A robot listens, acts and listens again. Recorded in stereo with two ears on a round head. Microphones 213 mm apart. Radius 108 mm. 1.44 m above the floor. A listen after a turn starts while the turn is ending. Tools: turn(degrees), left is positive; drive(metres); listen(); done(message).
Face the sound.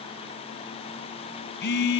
turn(degrees=50)
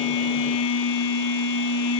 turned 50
turn(degrees=70)
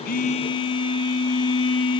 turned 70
turn(degrees=25)
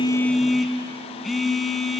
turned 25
done("Found it: a phone buzzing, straight ahead.")